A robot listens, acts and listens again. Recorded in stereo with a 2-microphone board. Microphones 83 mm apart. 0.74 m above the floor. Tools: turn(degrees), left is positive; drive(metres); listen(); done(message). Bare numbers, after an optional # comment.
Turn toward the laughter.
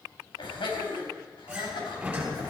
turn(90)
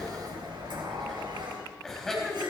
done("Facing the laughter.")